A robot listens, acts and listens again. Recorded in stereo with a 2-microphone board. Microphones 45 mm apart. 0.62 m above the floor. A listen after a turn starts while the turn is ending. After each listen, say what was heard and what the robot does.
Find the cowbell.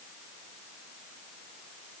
Keep listening.
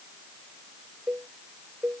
The cowbell: about 30° right or 150° right. Turn 30° right.
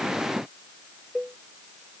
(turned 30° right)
Facing the cowbell.